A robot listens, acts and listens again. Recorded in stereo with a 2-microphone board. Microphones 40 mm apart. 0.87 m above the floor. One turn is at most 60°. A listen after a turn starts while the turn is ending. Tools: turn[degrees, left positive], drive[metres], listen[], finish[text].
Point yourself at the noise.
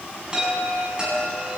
Thought: The chime: about 20° right or 160° right.
Action: turn[-20]
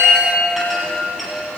Action: finish[Found it: a chime, straight ahead.]